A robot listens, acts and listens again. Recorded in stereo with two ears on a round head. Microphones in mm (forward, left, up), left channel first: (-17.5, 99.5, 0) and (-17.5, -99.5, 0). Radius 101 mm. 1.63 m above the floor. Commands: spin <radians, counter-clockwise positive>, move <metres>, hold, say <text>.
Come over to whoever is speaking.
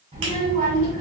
spin -0.61
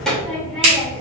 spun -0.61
move 1.0
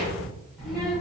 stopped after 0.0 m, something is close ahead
say Blocked. The child speaking is further on, straight ahead.